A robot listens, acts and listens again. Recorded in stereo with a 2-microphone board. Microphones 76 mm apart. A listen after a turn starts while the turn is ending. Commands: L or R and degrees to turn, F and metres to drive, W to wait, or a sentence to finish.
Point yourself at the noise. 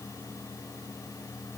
W
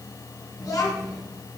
L50
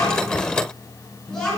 L10
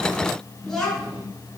Facing the child speaking.